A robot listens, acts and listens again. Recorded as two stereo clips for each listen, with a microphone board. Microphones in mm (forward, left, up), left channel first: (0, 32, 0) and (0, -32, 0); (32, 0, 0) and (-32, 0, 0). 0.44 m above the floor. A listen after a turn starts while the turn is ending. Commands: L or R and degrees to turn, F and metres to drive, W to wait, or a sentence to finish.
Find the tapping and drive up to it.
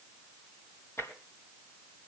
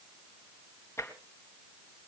L40
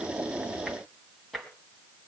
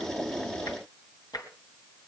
F1.0
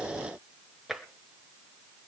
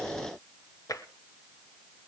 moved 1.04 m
F1.0
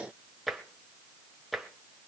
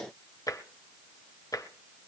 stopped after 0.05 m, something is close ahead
Arrived at the tapping, straight ahead.